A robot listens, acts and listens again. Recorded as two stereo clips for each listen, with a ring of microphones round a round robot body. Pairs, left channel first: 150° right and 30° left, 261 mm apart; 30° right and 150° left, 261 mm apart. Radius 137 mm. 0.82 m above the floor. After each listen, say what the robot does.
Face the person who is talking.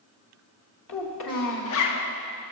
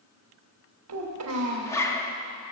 Turn 180° left.
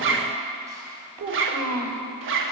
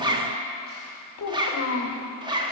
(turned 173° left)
Turn 10° left.
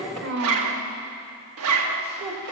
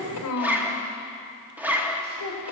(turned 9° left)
Found it: a child speaking, straight ahead, 2 to 4 m away.